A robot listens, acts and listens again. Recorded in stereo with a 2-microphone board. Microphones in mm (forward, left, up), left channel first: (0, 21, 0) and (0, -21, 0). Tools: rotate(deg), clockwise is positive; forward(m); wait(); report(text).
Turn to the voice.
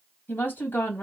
rotate(-60)
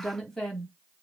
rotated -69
rotate(-10)
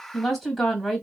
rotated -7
report("Facing the woman speaking.")